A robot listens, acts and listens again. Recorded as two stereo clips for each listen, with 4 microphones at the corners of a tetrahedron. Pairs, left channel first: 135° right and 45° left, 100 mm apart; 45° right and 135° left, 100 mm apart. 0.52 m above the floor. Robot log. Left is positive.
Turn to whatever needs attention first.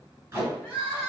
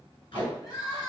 note: The crying: 70° right.
cmd yaw -70
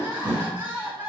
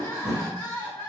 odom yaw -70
end: Facing the crying, 1 to 2 m away.